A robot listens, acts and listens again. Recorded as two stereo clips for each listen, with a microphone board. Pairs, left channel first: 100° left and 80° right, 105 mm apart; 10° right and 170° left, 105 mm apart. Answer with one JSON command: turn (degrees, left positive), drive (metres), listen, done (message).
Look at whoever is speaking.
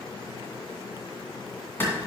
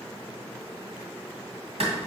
{"listen": true}
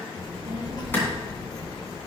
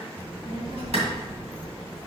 {"turn": 150}
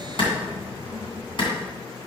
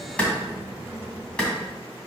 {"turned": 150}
{"turn": 65}
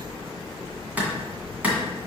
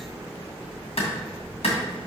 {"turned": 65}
{"done": "Facing the child speaking, 2 to 4 m away."}